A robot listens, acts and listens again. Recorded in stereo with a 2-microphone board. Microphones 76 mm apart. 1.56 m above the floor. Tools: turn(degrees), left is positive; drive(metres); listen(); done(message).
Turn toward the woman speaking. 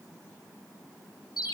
listen()
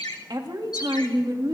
turn(degrees=-75)
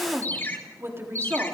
turn(degrees=-35)
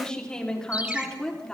turn(degrees=10)
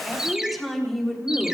done("Facing the woman speaking, over 4 m away.")